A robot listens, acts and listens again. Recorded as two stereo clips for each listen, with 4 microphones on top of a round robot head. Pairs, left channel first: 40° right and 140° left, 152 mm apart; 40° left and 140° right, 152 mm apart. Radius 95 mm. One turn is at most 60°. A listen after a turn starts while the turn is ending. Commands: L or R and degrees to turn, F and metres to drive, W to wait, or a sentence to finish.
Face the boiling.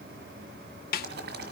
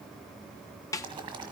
L60
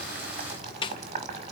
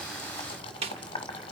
L60
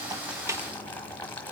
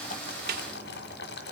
L40
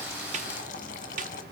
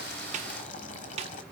Found it: boiling, straight ahead, 1 to 2 m away.